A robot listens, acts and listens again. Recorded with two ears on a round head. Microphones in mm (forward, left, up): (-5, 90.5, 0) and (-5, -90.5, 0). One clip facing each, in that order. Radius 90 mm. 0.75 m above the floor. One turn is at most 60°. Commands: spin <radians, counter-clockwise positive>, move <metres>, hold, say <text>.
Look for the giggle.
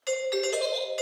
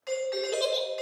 spin -0.52
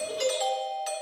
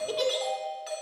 spin -1.05
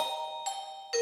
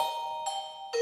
spin -0.87
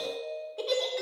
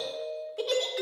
say Found it: a giggle, straight ahead.